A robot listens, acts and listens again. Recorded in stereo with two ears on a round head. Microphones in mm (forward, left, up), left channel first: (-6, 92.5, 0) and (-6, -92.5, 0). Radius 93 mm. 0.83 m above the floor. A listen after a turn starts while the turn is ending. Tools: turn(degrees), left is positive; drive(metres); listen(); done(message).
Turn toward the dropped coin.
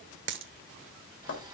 turn(degrees=-60)
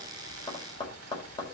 listen()
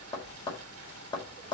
done("I heard a dropped coin, but can't make it out now. It was about straight ahead or 60° right.")